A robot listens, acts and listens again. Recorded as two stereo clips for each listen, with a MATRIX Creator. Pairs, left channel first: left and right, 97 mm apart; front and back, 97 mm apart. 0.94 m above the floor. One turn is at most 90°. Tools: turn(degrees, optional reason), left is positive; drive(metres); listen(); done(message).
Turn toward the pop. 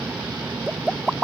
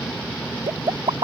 turn(degrees=-90, reason="The pop: 175° right.")
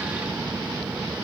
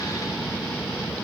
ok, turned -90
turn(degrees=-85, reason="Nothing new. It was at 85° right.")
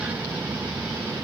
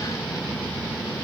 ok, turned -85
done("Facing where the pop came from. I can't hear it now.")